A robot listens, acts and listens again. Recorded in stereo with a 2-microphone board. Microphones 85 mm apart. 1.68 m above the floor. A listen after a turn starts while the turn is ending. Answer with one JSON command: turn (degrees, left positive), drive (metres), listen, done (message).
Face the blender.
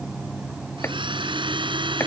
{"turn": -75}
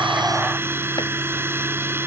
{"turn": -30}
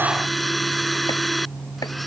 {"done": "Found it: a blender, straight ahead."}